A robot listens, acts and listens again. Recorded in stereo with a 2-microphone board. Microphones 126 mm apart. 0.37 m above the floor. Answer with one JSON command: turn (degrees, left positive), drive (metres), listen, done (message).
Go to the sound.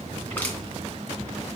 {"turn": 30}
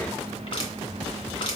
{"turn": 135}
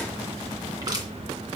{"turn": -30}
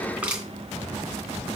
{"turn": -10}
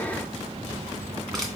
{"drive": 1.0}
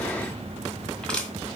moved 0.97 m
{"turn": 10}
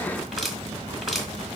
{"drive": 1.0}
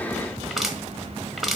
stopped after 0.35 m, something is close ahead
{"done": "Arrived at the crushing, straight ahead."}